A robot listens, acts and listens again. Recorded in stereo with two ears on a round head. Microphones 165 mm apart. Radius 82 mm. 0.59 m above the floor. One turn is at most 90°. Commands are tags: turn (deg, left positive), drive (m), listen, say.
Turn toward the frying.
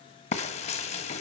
<turn deg="35"/>
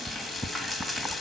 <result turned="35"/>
<say>Facing the frying, 1 to 2 m away.</say>